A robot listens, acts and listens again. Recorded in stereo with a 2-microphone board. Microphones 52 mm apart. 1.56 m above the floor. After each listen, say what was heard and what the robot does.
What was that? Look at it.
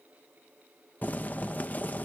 The boiling: about 35° left or 145° left. Turn 35° left.
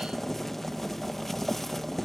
Found it: boiling, straight ahead.